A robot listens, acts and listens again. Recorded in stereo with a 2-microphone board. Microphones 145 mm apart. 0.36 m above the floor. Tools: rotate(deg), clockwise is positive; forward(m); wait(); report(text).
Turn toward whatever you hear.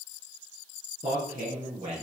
rotate(55)
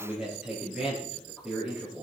rotate(10)
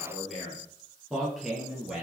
report("Found it: a man speaking, straight ahead, over 4 m away.")